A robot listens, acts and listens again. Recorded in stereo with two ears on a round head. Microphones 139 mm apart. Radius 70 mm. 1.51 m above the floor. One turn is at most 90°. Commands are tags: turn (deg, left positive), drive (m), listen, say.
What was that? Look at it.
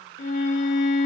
<turn deg="50"/>
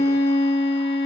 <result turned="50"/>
<turn deg="75"/>
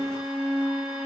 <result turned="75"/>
<say>Facing the violin.</say>